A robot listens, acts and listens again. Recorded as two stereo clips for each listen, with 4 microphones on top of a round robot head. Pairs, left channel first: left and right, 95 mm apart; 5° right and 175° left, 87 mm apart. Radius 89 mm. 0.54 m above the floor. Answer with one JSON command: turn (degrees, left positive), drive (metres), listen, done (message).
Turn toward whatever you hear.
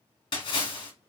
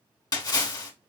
{"turn": 40}
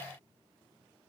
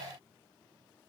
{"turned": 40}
{"done": "I heard a splash from this way, but can't make it out now."}